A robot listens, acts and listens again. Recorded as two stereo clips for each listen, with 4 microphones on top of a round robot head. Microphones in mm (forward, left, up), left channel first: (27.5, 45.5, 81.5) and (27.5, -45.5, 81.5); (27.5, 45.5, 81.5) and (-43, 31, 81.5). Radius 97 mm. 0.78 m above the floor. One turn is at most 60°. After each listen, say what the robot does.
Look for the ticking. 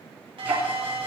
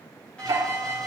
Turn 60° right.
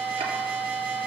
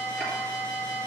Turn 55° right.
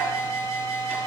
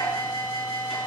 Turn 20° right.
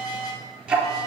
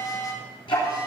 Turn 10° right.
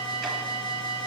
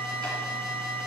Keep listening.
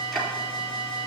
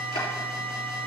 Facing the ticking, 2 to 4 m away.